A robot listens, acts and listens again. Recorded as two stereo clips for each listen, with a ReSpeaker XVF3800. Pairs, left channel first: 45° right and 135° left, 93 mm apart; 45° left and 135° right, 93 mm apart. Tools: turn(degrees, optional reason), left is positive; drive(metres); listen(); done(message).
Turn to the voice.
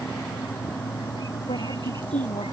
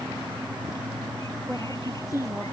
turn(degrees=-50, reason="The woman speaking: 50° right.")
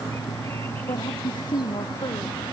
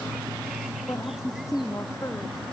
turn(degrees=-10, reason="The woman speaking is now 10° right.")
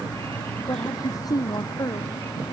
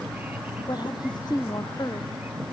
done("Facing the woman speaking.")